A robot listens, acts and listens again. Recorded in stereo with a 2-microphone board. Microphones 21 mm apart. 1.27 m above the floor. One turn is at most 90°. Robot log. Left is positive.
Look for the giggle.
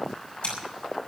cmd idle
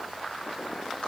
cmd idle
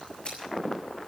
end: I can't make out a giggle to turn to.